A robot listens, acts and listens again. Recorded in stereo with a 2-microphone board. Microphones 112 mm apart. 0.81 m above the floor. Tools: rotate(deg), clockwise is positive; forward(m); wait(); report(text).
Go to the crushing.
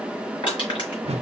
rotate(-50)
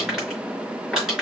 forward(1.0)
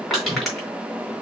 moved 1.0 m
forward(1.0)
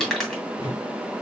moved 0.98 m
forward(1.0)
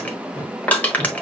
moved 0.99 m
rotate(-15)
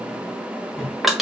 forward(1.0)
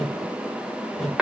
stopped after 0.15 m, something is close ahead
report("I am next to the crushing.")